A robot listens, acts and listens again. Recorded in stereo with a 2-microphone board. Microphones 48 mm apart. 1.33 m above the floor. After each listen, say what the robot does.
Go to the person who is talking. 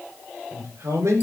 Turn 70° right.
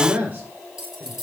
Turn 35° right.
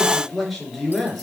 Drive 1.0 m forward.
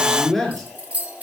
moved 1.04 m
Drive 1.0 m forward.
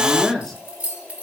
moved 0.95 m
Drive 1.0 m forward.
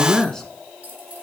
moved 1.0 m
Drive 1.0 m forward.
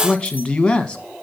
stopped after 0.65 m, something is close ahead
Turn 15° left.
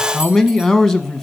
Arrived at the man speaking, straight ahead.